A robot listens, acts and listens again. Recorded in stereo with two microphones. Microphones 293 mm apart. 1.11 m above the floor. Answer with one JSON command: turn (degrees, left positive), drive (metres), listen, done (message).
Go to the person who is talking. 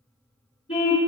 {"listen": true}
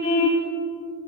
{"listen": true}
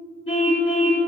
{"done": "I can't make out anyone speaking, only a car horn."}